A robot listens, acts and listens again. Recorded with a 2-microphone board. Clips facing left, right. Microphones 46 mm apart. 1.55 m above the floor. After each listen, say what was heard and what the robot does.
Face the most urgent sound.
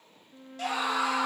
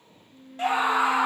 The scream: about 25° right or 155° right. Turn 25° right.
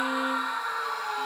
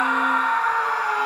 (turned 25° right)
So it is at 130° right. Turn 130° right.
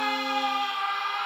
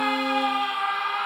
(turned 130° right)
The scream is now 10° right. Turn 10° right.
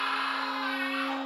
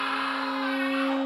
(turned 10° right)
Facing the scream.